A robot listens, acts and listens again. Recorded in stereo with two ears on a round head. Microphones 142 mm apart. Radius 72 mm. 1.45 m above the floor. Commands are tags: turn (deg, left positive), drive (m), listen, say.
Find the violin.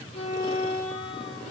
<turn deg="40"/>
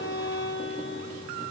<turn deg="95"/>
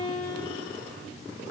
<turn deg="30"/>
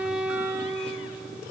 <say>Facing the violin, over 4 m away.</say>